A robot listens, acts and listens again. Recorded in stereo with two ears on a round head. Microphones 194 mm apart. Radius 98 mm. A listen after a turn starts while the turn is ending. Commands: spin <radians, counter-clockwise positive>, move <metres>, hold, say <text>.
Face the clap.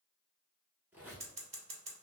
hold
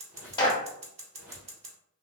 spin 0.35
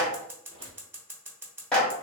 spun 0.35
say Facing the clap, 1 to 2 m away.